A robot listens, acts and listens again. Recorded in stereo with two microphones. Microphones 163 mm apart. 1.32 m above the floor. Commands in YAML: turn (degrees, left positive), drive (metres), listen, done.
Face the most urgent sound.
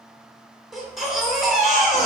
turn: 30
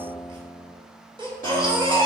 turn: -35
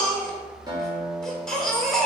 done: "Facing the baby crying."